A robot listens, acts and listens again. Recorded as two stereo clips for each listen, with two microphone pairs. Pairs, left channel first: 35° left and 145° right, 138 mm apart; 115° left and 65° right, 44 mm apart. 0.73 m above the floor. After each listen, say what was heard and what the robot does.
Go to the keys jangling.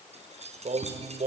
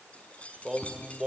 The keys jangling: 175° left. Turn 175° left.
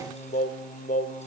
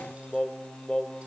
Keep listening.
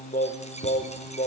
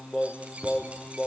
Drive 1.0 m forward.
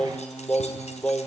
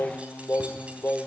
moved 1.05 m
Keep listening.
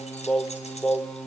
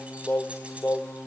Keep listening.
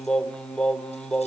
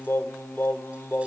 I heard keys jangling from this way, but can't make it out now. I did not reach it.